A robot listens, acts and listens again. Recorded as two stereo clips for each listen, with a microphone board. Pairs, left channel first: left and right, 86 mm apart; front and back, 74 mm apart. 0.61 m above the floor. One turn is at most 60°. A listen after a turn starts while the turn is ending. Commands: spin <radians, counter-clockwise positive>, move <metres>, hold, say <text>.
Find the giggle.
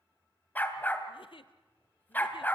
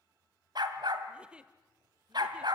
spin 1.05
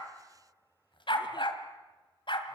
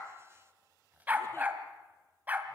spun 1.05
spin 0.79
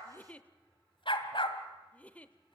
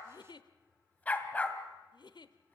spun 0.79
spin 0.26
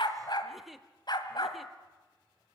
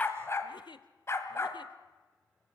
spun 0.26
say Facing the giggle.